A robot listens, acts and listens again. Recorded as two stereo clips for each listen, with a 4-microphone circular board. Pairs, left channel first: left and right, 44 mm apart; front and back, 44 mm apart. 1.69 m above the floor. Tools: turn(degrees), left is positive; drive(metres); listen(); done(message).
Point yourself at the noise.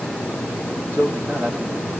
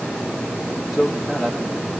turn(degrees=-95)
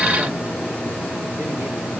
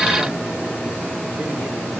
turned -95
listen()
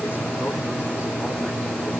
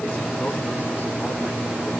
listen()
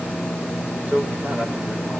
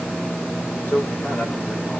turn(degrees=-40)
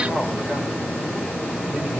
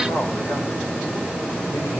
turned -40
listen()
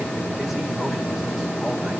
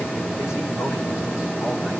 listen()
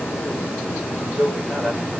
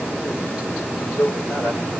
turn(degrees=-10)
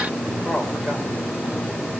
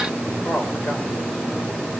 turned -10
done("Facing the man speaking.")